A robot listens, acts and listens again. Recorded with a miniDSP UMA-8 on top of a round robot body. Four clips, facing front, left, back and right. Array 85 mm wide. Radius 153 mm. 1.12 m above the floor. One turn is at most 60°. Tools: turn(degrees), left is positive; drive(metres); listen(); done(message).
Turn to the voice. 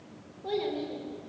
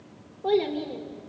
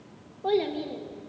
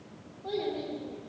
turn(degrees=60)
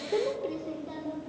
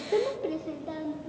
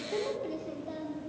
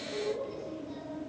turn(degrees=60)
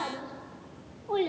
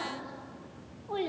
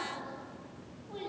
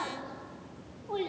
turn(degrees=20)
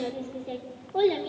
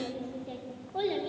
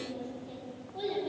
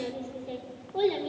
done("Found it: a child speaking, straight ahead.")